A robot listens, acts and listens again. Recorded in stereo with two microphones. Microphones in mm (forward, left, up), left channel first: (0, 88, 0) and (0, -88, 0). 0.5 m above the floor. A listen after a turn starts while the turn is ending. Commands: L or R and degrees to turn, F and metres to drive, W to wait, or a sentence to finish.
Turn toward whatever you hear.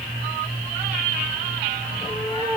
L25
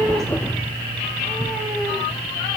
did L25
Facing the cat meowing, over 4 m away.